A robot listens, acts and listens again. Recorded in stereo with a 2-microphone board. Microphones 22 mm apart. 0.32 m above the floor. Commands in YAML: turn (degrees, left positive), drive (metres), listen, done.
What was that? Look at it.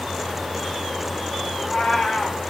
turn: 30
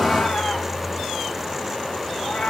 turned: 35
turn: 135
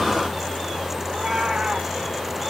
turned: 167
turn: -30
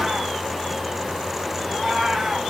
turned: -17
turn: -15
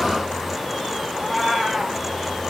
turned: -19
done: "Facing the cat meowing."